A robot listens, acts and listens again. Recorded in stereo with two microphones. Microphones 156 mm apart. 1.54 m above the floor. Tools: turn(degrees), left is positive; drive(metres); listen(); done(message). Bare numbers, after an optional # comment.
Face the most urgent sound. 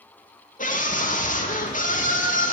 # The scream: about 55° left or 125° left.
turn(55)
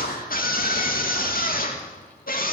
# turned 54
# So it is at 70° left.
turn(70)
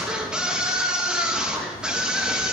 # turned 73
done("Found it: a scream, straight ahead, 2 to 4 m away.")